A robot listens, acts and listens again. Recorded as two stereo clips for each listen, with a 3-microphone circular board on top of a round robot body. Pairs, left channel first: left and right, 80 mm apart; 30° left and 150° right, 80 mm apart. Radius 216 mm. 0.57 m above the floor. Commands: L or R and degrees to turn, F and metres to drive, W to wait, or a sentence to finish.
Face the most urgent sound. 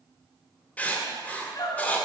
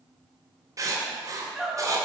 L120
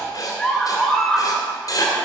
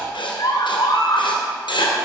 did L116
Found it: a scream, straight ahead, 2 to 4 m away.